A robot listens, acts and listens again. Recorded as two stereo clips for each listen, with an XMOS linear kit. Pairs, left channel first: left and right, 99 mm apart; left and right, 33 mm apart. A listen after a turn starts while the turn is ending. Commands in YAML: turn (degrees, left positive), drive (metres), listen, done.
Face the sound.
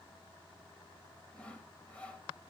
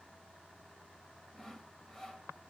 turn: 30
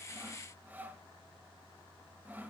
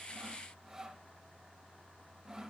turn: -20
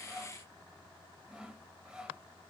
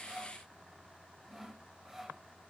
turn: -10
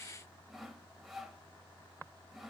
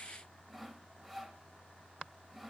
done: "Found it: sawing, straight ahead."